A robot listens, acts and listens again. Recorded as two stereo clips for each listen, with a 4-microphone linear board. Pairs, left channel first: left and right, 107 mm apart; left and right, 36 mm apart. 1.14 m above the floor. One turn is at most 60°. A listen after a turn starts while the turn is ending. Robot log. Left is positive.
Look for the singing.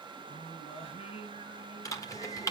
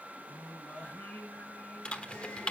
note: The singing: about 60° left or 120° left.
cmd yaw +60
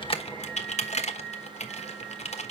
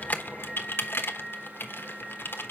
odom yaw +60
end: Facing the singing, 2 to 4 m away.